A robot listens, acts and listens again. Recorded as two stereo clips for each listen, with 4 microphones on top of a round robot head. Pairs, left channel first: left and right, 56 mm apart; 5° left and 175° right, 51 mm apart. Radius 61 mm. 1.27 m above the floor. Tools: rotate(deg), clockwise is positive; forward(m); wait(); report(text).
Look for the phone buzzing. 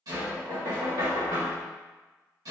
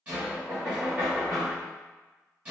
wait()
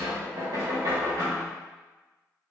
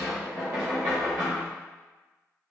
wait()
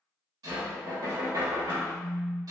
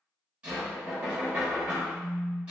rotate(40)
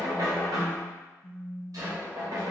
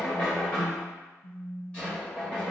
report("Found it: a phone buzzing, straight ahead, 1 to 2 m away.")